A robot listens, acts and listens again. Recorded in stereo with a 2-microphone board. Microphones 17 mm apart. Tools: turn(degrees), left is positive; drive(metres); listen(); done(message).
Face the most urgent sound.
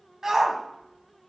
turn(degrees=-25)
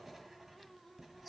listen()
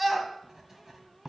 done("Found it: a shout, straight ahead.")